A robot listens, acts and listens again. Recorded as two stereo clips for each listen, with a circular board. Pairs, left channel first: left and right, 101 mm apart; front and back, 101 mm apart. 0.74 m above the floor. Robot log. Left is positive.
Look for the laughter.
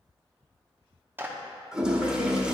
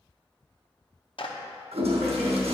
note: The laughter: 100° left.
cmd yaw +100
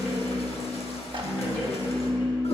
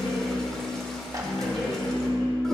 note: The laughter is now 10° left.
cmd yaw +10
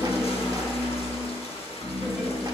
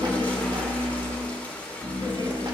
end: Found it: laughter, straight ahead.